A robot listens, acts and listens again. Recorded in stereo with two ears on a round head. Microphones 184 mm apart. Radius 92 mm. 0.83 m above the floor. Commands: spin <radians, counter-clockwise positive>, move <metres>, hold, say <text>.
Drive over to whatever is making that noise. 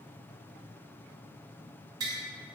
spin -0.35
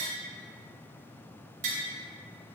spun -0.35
spin -2.44
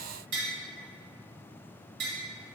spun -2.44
spin -0.96
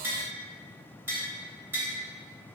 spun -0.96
spin -0.17
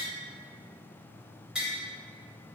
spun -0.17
move 1.0
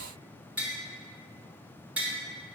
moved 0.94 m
move 1.0
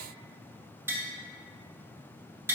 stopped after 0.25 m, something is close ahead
spin -0.17
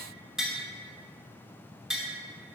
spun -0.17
say I am next to the tapping.